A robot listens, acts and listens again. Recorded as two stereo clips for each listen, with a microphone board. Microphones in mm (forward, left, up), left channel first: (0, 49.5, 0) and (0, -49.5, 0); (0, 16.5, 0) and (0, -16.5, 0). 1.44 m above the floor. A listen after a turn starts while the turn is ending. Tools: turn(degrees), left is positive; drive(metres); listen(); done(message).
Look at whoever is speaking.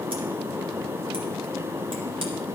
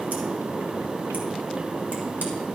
listen()
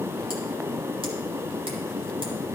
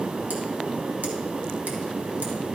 listen()
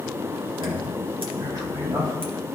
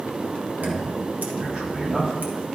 turn(degrees=-40)
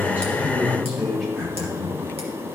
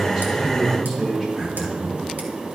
done("Found it: a man speaking, straight ahead.")